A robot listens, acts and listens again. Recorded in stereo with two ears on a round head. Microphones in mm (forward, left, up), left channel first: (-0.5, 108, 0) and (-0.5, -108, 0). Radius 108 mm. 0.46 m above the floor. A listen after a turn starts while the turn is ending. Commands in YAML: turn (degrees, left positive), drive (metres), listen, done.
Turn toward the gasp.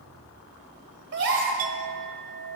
turn: -50
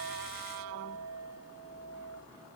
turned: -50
listen: true
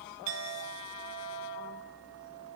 done: "I heard a gasp, but can't make it out now. It was about straight ahead or 80° right."